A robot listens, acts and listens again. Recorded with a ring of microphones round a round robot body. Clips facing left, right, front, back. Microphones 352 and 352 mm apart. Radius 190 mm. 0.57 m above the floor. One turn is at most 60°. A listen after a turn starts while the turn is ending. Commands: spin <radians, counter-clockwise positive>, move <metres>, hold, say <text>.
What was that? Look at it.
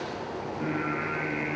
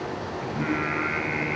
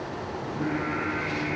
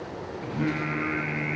spin -1.05
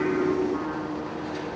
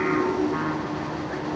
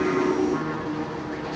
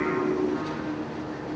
spin -1.05
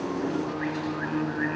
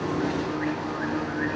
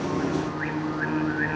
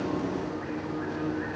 say Found it: singing, straight ahead.